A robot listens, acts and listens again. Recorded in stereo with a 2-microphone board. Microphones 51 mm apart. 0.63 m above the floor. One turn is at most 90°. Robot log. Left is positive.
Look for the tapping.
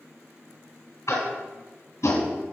cmd yaw +90
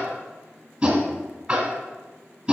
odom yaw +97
note: So it is at 15° right.
cmd yaw -15
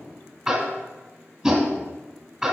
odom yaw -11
end: Found it: tapping, straight ahead.